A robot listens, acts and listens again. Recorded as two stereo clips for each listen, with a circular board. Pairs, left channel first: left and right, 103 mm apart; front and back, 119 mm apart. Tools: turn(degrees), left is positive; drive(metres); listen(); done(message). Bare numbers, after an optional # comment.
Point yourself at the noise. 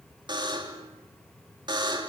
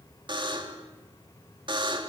# The buzzer: 130° right.
turn(-130)
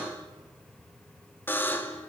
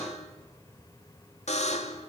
# The buzzer is now 20° left.
turn(20)
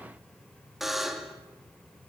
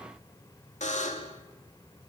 done("Facing the buzzer, 2 to 4 m away.")